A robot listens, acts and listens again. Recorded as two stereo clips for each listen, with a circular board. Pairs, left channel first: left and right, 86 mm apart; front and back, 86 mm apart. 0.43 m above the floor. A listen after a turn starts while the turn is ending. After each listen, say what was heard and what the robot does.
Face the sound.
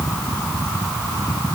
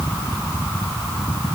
Keep listening.
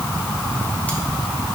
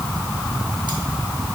Keep listening.
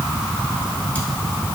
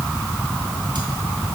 I can't make out anything to turn to.